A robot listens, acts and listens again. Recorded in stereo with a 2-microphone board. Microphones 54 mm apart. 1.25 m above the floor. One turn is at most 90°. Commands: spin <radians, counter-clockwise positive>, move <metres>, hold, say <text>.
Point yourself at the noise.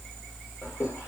spin 1.05
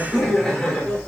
spin 0.17
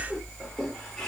spin 0.26
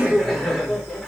say Found it: laughter, straight ahead, over 4 m away.